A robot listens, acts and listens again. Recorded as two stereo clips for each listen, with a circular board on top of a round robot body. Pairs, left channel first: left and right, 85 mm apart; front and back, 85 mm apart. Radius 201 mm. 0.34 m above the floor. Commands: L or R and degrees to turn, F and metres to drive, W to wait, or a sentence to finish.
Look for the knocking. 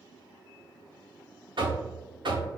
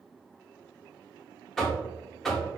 R85
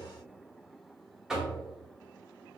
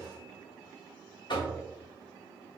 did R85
R10
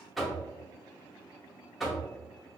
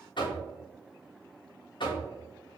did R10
Found it: knocking, straight ahead, 1 to 2 m away.